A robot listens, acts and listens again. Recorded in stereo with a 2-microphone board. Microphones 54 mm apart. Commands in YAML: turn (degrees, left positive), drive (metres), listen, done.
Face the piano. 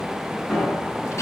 turn: 30
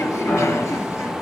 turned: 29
turn: 140
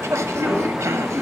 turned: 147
listen: true
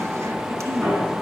done: "Found it: a piano, straight ahead, over 4 m away."